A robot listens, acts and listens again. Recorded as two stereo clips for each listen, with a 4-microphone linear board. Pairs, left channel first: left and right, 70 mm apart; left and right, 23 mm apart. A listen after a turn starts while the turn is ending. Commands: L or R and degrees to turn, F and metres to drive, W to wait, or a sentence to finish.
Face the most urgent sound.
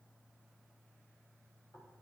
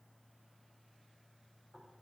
W
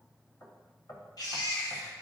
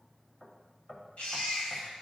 L65
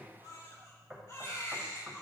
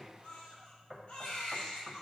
L45
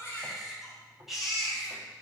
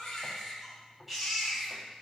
Facing the baby crying.